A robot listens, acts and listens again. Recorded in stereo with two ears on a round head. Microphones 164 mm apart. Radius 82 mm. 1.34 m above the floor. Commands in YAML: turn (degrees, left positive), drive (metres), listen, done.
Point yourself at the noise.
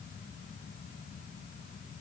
listen: true
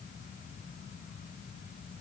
listen: true
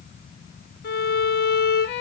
turn: 65
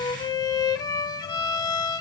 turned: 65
turn: 25
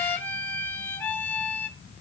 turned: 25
turn: 10
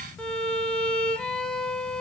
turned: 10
done: "Found it: a violin, straight ahead."